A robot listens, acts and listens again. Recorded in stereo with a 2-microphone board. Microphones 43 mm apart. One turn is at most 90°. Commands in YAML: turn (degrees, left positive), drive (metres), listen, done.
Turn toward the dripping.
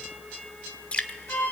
turn: 30
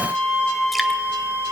listen: true
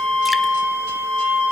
listen: true
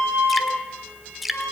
done: "Found it: dripping, straight ahead, 1 to 2 m away."